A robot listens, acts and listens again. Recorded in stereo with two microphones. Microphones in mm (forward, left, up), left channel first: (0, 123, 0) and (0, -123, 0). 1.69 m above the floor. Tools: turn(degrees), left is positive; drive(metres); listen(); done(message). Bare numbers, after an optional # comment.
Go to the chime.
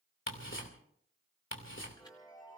# The chime: about 15° left or 165° left.
turn(15)
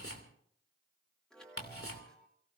drive(1.0)
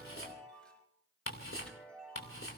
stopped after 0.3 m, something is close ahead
done("Something is in my way. I am facing the chime but have not reached it.")